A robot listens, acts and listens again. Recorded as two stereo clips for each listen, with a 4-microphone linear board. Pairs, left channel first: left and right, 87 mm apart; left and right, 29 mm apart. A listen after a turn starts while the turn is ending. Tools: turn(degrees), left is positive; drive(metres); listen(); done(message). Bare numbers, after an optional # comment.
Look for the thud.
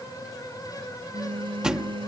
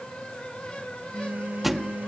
turn(-30)
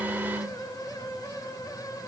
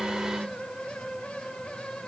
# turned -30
listen()
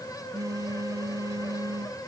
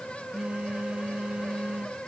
done("I heard a thud, but can't make it out now. It was about 20° left or 140° right.")